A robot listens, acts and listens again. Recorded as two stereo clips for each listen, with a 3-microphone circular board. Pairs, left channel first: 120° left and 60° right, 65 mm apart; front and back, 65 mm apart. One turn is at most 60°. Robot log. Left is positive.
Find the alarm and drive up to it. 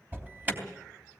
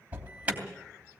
note: The alarm: 115° right.
cmd yaw -60
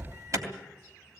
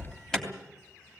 note: The alarm is now 85° right.
cmd yaw -60
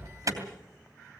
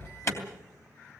note: The alarm is now 40° right.
cmd yaw -40
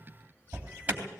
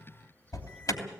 cmd fwd 1.0
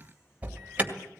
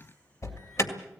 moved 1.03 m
cmd fwd 1.0
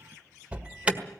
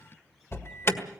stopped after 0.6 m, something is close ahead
end: Arrived at the alarm, straight ahead.